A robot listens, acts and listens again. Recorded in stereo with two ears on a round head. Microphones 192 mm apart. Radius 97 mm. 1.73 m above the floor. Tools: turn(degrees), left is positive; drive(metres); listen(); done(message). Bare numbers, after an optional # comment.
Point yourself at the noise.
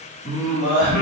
# The singing: about 30° left or 150° left.
turn(30)
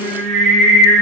# So it is at 10° right.
turn(-10)
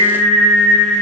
# The singing is now 20° right.
turn(-20)
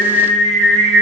# The singing is now 30° right.
turn(-30)
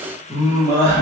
# The singing is now 20° right.
turn(-20)
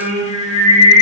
done("Facing the singing, 1 to 2 m away.")